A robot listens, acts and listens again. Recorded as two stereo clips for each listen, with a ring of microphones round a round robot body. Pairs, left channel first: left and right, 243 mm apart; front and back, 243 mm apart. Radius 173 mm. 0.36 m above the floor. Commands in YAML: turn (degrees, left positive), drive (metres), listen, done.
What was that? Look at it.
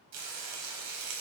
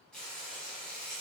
turn: -85
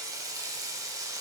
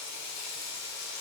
turn: -15
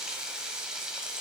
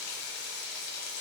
done: "Facing the frying, 1 to 2 m away."